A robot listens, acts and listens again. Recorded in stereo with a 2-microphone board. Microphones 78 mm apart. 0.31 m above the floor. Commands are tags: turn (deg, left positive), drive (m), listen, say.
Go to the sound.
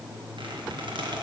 <turn deg="-70"/>
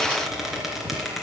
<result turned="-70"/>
<drive m="1.0"/>
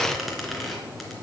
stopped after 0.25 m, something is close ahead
<say>Something is in my way. I am facing the squeak but have not reached it.</say>